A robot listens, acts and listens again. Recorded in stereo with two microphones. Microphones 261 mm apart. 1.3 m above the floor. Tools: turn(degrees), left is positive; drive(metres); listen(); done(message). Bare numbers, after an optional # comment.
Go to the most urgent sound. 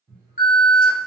# The alarm: about 35° left or 145° left.
turn(35)
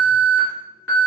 # So it is at 110° left.
turn(110)
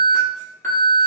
# The alarm is now 10° left.
turn(10)
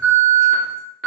drive(1.0)
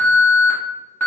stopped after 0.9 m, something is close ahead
# The alarm is now 10° left.
turn(10)
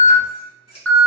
done("I am next to the alarm.")